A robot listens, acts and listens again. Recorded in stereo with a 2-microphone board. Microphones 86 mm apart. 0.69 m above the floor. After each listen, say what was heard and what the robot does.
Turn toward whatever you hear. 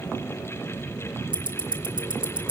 The ticking: about 70° right or 110° right. Turn 70° right.
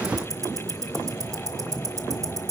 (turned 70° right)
So it is at 40° right. Turn 40° right.
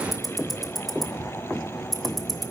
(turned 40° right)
Found it: ticking, straight ahead.